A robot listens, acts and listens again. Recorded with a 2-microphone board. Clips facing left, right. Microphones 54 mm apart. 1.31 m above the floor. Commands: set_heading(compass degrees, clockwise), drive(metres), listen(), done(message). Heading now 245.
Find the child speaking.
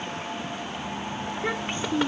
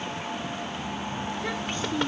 set_heading(225)
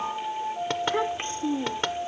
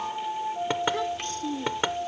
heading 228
set_heading(203)
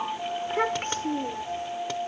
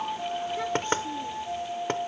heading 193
set_heading(68)
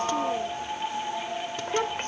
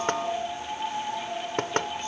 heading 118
set_heading(68)
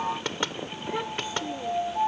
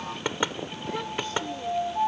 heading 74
set_heading(64)
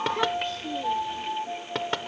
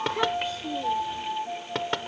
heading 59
done("Facing the child speaking.")